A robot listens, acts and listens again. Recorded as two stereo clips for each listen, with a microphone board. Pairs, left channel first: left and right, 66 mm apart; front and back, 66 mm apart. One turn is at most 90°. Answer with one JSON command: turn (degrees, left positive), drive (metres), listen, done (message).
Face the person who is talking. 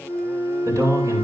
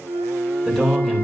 {"turn": -80}
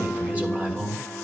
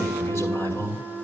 {"turn": -25}
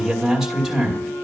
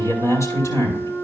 {"turn": -10}
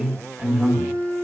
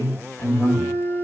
{"done": "Facing the man speaking."}